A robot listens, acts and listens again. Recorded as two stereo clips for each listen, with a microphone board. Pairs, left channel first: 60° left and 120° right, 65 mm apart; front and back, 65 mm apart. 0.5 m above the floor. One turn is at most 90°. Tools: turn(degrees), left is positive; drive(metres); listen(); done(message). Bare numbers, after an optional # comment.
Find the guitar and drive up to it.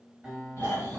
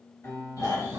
# The guitar: 40° right.
turn(-40)
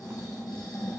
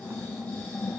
listen()
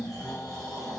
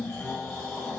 listen()
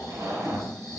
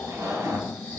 done("Facing where the guitar came from. I can't hear it now. I did not reach it.")